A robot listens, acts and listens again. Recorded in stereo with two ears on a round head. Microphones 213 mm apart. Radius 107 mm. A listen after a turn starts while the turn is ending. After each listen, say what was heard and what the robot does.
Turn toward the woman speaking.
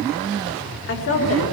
The woman speaking: about 55° left or 125° left. Turn 55° left.
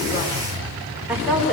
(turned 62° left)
Found it: a woman speaking, straight ahead, over 4 m away.